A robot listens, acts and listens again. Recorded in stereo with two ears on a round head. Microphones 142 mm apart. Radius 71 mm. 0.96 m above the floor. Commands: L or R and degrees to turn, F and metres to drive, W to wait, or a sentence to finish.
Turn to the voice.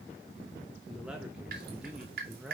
R30
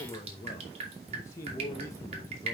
L25
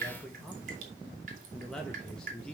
Facing the man speaking.